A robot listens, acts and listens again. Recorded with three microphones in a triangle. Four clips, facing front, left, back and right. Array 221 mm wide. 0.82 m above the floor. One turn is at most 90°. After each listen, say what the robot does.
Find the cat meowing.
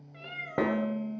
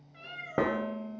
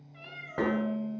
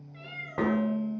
Facing the cat meowing, 1 to 2 m away.